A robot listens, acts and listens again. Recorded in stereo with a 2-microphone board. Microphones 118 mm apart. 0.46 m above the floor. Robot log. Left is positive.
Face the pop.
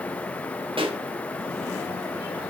note: The pop: about 50° right or 130° right.
cmd yaw -50
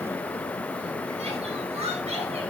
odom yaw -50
cmd idle
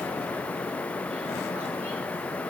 end: I heard a pop, but can't make it out now. It was about straight ahead or 80° right.